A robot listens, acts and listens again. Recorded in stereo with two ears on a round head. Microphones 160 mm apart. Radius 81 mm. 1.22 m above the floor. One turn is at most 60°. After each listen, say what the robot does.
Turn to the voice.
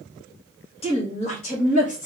Turn 45° left.
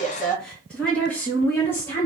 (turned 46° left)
Turn 15° left.
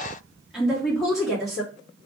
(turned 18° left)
Facing the woman speaking, 2 to 4 m away.